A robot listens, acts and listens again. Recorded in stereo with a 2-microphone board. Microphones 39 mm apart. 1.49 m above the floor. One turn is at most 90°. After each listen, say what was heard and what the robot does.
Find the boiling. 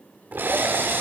The boiling: about 50° right or 130° right. Turn 50° right.
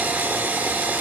Keep listening.
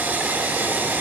Keep listening.
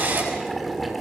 Facing the boiling, 2 to 4 m away.